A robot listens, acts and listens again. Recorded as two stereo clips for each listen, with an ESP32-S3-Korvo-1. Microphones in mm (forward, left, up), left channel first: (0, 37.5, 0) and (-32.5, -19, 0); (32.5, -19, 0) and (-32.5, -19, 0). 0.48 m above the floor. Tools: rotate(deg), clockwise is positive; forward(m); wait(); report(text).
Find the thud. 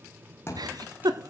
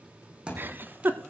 rotate(-105)
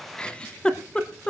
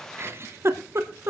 report("I heard a thud from this way, but can't make it out now.")